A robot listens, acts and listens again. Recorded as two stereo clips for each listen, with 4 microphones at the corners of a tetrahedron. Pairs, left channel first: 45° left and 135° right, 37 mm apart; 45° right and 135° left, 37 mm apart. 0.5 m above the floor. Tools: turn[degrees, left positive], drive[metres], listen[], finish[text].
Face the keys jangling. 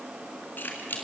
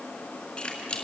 Thought: The keys jangling: 15° left.
Action: turn[15]
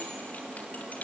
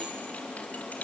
Action: finish[Found it: keys jangling, straight ahead, over 4 m away.]